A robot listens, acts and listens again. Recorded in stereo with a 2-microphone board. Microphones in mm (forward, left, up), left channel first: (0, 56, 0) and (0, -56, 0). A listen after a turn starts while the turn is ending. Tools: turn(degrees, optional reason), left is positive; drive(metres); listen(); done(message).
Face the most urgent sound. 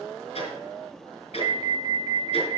turn(degrees=-50, reason="The alarm: about 50° right or 130° right.")
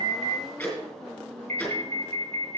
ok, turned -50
turn(degrees=-80, reason="So it is at 80° right.")
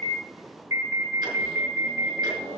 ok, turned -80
turn(degrees=-25, reason="The alarm is now 25° right.")
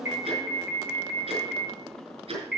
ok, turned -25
done("Facing the alarm.")